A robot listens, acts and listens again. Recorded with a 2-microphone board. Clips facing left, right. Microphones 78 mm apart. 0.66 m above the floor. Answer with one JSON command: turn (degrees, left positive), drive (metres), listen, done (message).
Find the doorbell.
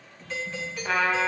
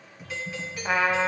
{"turn": -30}
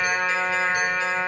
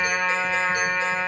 {"listen": true}
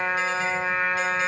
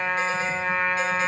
{"listen": true}
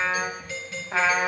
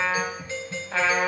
{"turn": -140}
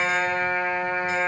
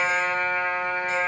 {"listen": true}
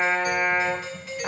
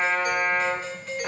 {"done": "Facing the doorbell, 1 to 2 m away."}